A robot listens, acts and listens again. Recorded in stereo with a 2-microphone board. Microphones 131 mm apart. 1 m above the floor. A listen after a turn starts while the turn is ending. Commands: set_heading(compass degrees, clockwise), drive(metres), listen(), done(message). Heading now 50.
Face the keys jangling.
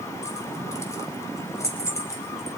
set_heading(30)
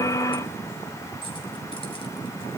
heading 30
listen()
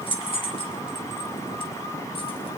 set_heading(250)
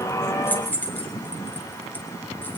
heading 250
set_heading(235)
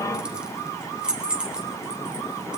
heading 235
done("Facing the keys jangling, 2 to 4 m away.")